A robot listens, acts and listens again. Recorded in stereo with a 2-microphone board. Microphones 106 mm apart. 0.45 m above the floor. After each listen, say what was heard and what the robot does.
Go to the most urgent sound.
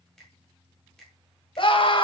The scream: about 55° left or 125° left. Turn 55° left.
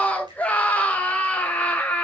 So it is at 15° left. Turn 15° left.
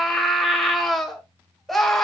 Drive 1.0 m forward.
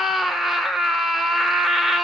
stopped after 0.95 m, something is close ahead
Arrived at the scream, straight ahead.